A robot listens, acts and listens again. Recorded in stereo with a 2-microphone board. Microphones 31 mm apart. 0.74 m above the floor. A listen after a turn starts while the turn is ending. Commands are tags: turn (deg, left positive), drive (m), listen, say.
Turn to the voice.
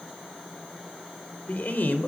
<turn deg="75"/>
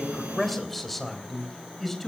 <turn deg="10"/>
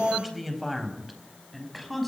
<say>Found it: a man speaking, straight ahead.</say>